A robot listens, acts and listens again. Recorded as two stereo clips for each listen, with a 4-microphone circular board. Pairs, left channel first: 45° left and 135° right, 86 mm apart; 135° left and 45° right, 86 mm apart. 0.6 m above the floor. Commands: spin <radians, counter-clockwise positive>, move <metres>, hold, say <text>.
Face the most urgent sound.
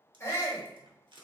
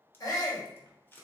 spin 1.75
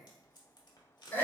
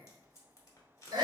spin -0.35
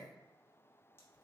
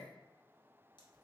hold
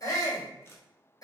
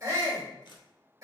say Found it: a shout, straight ahead, 1 to 2 m away.